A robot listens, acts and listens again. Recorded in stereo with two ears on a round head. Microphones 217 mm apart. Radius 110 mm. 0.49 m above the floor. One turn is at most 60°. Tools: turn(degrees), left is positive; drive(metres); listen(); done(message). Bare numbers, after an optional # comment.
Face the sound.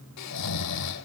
turn(60)
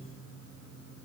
# Nothing new. It was at 30° left.
turn(30)
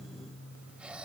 done("Found it: snoring, straight ahead.")